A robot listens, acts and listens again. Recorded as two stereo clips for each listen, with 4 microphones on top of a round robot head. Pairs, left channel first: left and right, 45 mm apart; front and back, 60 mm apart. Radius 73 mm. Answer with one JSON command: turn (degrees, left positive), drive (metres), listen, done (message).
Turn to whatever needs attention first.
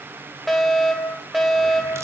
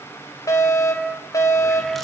{"done": "Found it: a fire alarm, straight ahead, over 4 m away."}